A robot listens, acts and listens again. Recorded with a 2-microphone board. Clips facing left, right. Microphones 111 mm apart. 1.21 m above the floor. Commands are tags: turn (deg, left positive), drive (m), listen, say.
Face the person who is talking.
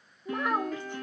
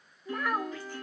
<turn deg="20"/>
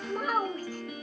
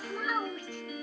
<turn deg="140"/>
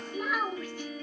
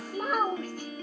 <turn deg="-40"/>
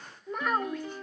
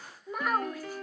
<say>Found it: a child speaking, straight ahead.</say>